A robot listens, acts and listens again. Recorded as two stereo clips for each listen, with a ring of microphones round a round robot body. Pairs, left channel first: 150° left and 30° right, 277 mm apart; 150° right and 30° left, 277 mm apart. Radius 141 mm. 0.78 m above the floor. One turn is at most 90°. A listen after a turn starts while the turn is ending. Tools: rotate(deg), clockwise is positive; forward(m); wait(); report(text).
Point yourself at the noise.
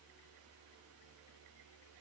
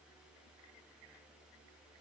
wait()
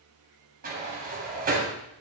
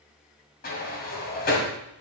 rotate(90)
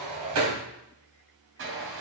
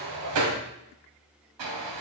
rotate(-15)
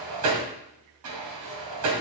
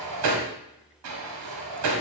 report("Facing the sliding door.")